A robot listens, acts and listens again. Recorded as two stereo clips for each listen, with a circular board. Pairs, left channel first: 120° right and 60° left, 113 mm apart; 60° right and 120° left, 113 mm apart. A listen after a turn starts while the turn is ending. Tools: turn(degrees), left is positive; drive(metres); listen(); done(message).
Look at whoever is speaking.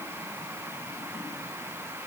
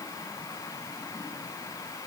listen()
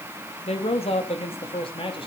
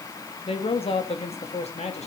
turn(degrees=-80)
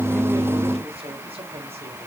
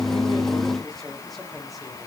turn(degrees=30)
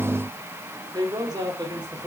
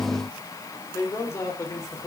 done("Found it: a man speaking, straight ahead.")